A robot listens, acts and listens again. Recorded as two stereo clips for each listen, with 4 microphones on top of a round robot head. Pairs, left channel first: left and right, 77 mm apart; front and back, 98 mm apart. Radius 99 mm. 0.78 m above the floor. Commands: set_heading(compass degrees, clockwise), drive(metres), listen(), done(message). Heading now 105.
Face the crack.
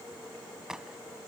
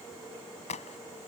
done("Facing the crack.")